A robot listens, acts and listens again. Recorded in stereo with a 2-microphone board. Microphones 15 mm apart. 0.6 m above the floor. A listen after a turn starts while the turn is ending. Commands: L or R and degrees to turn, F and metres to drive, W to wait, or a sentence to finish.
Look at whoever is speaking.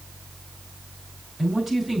R30
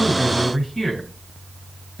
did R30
L25
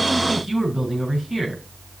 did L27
Facing the man speaking, over 4 m away.